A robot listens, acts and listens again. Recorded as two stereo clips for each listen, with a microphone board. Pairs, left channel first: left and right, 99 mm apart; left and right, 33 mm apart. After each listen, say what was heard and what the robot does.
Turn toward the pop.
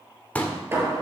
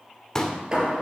The pop: about 15° left or 165° left. Turn 15° left.
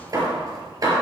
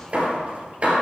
Keep listening.
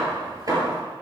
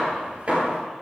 I heard a pop, but can't make it out now. It was about straight ahead or 150° left.